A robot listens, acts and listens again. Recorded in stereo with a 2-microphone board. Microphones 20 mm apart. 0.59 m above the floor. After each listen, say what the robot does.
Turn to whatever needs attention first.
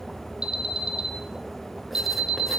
Turn 40° right.
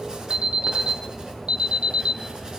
Turn 100° right.
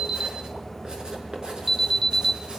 Found it: an alarm, straight ahead.